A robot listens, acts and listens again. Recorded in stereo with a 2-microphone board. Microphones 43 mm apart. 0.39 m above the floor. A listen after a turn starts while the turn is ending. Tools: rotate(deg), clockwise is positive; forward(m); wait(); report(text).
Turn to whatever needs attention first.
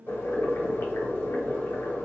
wait()
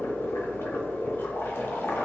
wait()
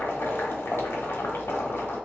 report("I can't make out anything urgent, only boiling.")